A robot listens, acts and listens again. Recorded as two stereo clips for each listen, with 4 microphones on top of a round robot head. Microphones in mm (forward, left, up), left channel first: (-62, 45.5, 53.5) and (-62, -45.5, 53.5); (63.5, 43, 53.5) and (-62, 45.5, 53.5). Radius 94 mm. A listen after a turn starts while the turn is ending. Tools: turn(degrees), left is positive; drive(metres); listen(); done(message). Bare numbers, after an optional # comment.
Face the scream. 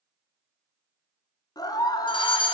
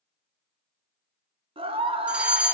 # The scream: 135° left.
turn(135)
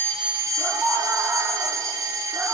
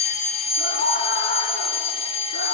done("Found it: a scream, straight ahead.")